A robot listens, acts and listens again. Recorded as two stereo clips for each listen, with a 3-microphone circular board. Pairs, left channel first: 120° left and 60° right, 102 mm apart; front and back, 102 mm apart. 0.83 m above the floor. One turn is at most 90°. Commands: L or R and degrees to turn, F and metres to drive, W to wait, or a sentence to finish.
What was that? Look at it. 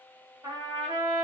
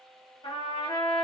R25
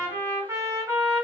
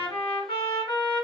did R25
R10
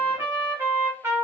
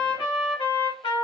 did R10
Facing the trumpet.